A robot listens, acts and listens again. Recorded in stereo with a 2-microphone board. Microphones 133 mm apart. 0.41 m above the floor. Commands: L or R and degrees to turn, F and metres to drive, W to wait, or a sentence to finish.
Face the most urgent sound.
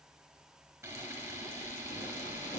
W
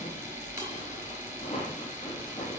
W
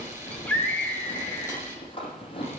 L30
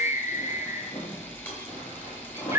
R20
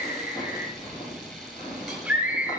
R10
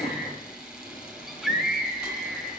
Found it: a scream, straight ahead, 2 to 4 m away.